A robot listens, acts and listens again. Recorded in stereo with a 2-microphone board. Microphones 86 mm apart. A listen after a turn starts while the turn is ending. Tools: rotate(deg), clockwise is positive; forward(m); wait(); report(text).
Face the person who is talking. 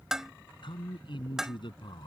rotate(-75)
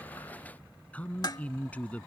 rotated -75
rotate(-20)
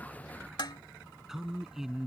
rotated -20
report("Found it: a man speaking, straight ahead.")